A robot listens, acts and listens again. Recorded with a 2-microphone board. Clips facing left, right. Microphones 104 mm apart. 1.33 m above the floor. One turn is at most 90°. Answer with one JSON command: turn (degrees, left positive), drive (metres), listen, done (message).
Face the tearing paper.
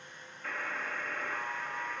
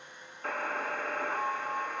{"listen": true}
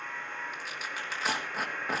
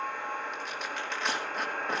{"turn": 30}
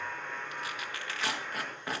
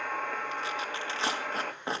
{"turn": -30}
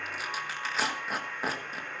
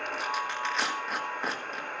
{"done": "Facing the tearing paper, 1 to 2 m away."}